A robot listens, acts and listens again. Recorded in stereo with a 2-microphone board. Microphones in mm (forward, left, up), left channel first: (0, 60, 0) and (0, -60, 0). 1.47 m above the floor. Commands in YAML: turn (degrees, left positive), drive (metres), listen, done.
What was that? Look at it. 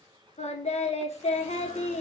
turn: 65
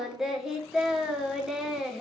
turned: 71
done: "Found it: singing, straight ahead, 1 to 2 m away."